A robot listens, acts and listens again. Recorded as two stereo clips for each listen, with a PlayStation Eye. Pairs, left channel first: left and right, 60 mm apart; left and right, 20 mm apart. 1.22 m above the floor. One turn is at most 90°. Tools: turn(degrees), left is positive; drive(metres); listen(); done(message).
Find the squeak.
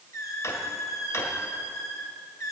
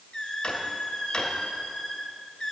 turn(degrees=60)
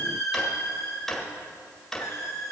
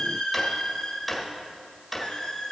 turn(degrees=55)
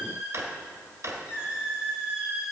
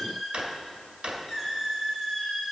turn(degrees=-25)
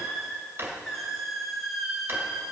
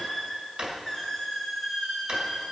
done("Facing the squeak, 2 to 4 m away.")